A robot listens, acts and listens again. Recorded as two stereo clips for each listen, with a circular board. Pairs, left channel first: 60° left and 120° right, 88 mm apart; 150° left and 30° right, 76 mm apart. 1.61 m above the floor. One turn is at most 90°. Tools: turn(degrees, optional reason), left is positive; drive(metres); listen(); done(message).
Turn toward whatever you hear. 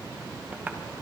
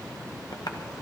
turn(degrees=90, reason="The tapping: 170° left.")
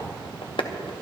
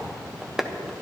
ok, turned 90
turn(degrees=60, reason="The tapping is now 60° left.")
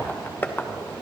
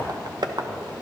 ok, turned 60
done("Found it: tapping, straight ahead, under 1 m away.")